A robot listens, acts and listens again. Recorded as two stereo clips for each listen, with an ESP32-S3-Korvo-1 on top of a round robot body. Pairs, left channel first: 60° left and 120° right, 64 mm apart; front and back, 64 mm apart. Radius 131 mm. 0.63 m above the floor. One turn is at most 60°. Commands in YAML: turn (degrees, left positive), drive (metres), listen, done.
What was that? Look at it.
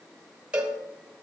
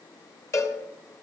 turn: -45
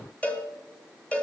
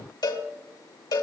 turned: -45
turn: -10
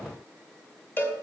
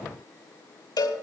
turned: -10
done: "Found it: a cowbell, straight ahead, 1 to 2 m away."